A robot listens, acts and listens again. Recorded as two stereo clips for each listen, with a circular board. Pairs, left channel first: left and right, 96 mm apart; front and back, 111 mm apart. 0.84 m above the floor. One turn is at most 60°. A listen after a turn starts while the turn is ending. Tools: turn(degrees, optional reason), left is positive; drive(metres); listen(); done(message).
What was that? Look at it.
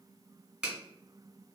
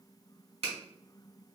turn(degrees=-60, reason="The finger snap: 170° right.")
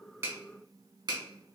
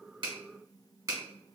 turn(degrees=-60, reason="The finger snap is now 125° right.")
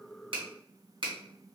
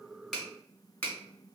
turn(degrees=-60, reason="The finger snap is now 70° right.")
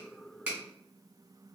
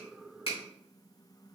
turn(degrees=-10, reason="Nothing new. It was at 10° right.")
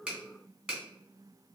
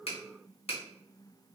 turn(degrees=-10, reason="The finger snap is now 10° right.")
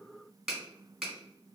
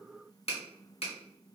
done("Found it: a finger snap, straight ahead, 1 to 2 m away.")